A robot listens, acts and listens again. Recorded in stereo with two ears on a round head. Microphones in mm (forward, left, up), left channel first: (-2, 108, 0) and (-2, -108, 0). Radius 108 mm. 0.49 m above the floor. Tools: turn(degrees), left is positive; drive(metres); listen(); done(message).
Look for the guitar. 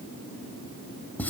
listen()
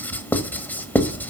listen()
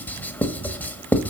done("I can't make out a guitar to turn to.")